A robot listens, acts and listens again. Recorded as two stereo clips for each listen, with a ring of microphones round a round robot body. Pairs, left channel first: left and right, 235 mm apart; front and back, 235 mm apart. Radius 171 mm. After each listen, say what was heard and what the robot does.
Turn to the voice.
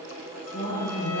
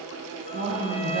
The woman speaking: 150° left. Turn 150° left.
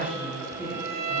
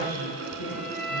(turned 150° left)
The woman speaking is now 10° right. Turn 10° right.
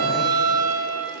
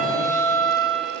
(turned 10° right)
Keep listening.
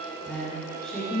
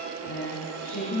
Found it: a woman speaking, straight ahead.